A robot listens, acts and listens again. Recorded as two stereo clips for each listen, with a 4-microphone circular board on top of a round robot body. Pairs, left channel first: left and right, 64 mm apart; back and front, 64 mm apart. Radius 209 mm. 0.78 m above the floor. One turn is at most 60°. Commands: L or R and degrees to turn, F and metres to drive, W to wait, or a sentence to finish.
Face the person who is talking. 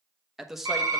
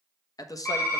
R60
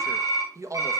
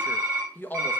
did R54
R60
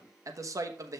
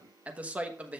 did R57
R60
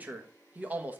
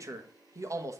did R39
R25
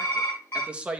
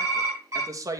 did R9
R20
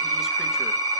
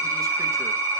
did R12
W
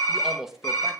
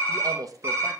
Facing the man speaking.